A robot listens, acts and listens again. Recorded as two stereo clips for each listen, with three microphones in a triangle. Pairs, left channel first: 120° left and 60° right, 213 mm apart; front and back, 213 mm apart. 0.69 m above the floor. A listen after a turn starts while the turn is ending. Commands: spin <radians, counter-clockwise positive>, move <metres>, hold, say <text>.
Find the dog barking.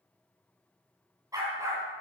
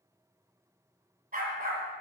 spin -2.36
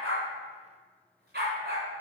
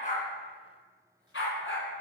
spin -0.35
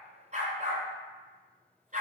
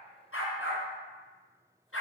say Facing the dog barking.